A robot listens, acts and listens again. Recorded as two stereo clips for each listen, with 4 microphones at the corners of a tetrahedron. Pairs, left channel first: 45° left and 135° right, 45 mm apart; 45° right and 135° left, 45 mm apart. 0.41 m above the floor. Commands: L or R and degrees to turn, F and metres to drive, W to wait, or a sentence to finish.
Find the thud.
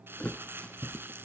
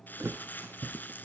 L110
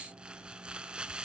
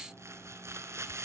Facing where the thud came from. I can't hear it now.